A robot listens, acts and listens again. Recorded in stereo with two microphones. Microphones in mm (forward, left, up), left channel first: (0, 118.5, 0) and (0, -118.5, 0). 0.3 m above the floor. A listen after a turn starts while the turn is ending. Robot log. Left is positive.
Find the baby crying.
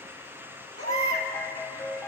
note: The baby crying: about 70° right or 110° right.
cmd yaw -70
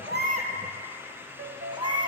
note: So it is at 20° right.
cmd yaw -20
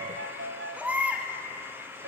end: Facing the baby crying, 1 to 2 m away.